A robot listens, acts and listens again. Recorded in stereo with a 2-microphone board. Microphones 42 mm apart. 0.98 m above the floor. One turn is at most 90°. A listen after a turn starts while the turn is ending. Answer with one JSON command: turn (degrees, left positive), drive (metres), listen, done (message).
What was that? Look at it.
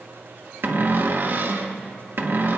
{"turn": -55}
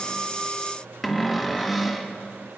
{"done": "Found it: a cupboard door, straight ahead."}